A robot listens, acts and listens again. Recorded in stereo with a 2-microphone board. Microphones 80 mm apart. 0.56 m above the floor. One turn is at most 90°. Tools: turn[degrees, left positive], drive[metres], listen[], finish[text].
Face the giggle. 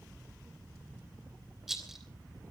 Action: listen[]
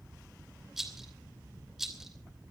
Action: listen[]
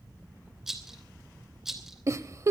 Thought: The giggle: about 40° right or 140° right.
Action: turn[-40]
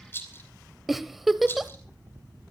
Action: finish[Found it: a giggle, straight ahead.]